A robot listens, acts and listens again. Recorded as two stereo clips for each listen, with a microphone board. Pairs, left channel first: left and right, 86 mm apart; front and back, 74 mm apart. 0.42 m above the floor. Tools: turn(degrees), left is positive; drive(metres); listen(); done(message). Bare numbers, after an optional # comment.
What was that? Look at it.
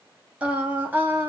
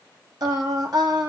# The singing: 155° right.
turn(-155)
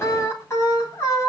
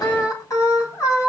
# The singing is now 40° left.
turn(40)
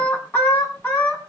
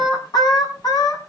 # The singing is now 25° left.
turn(25)
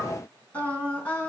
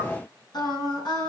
# The singing is now 20° left.
turn(20)
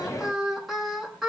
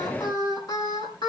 done("Facing the singing, over 4 m away.")